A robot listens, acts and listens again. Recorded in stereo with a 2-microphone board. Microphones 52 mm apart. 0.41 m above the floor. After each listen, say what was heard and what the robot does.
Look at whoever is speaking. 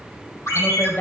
The woman speaking: about 35° left or 145° left. Turn 35° left.
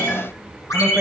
Keep listening.
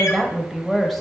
Facing the woman speaking.